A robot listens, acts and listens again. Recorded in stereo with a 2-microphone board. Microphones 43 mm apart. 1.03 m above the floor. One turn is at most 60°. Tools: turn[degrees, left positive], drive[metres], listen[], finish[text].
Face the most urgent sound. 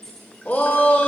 Thought: The shout: about 45° left or 135° left.
Action: turn[45]
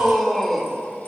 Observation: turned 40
Action: finish[Facing the shout.]